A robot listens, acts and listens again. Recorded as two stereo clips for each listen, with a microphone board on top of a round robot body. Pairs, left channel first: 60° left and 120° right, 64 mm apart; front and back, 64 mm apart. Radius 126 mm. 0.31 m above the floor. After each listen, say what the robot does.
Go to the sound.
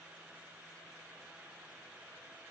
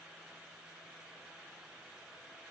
Keep listening.
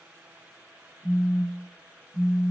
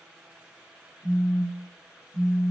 Turn 15° left.
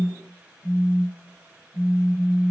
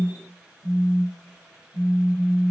Drive 1.0 m forward.
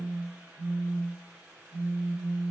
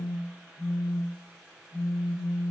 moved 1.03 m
Drive 1.0 m forward.
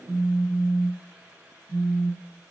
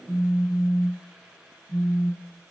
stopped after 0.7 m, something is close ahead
Turn 10° right.
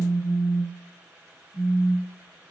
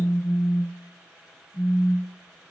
I am next to the phone buzzing.